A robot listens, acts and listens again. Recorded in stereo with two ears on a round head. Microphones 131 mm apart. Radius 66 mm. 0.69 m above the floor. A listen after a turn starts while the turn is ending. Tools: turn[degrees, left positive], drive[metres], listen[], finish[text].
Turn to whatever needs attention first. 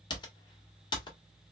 Action: listen[]
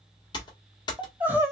Action: turn[-30]
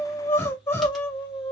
Thought: So it is at 15° left.
Action: turn[15]
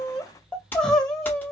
Action: finish[Facing the crying, under 1 m away.]